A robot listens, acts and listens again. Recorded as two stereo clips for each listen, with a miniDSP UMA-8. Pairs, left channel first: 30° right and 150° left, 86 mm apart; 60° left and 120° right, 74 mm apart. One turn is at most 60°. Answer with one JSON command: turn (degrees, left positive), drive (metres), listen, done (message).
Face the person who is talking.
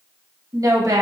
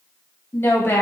{"turn": 60}
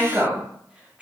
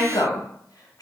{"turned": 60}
{"turn": 60}
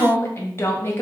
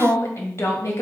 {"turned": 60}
{"turn": 20}
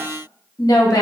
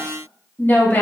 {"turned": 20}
{"done": "Facing the woman speaking, 1 to 2 m away."}